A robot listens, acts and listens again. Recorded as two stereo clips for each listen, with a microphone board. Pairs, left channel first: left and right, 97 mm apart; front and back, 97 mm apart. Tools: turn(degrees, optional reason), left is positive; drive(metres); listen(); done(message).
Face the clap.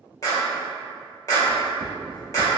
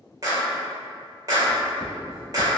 turn(degrees=135, reason="The clap: 135° left.")
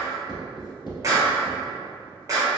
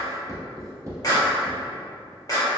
turn(degrees=-45, reason="The clap is now 45° right.")
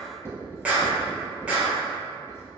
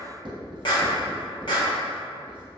turn(degrees=-15, reason="The clap is now 15° right.")
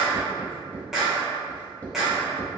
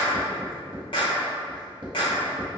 done("Found it: a clap, straight ahead, 1 to 2 m away.")